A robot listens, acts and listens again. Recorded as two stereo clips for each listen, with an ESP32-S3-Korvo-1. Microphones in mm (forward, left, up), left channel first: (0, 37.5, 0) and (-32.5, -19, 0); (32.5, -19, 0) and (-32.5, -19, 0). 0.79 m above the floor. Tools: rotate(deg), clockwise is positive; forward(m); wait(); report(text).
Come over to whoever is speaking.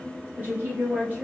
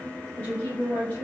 rotate(65)
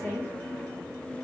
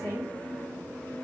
forward(1.0)
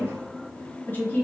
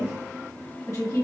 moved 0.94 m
rotate(-10)
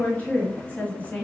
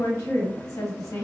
forward(1.0)
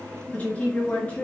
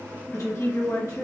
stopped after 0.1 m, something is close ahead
report("Arrived at the woman speaking, straight ahead.")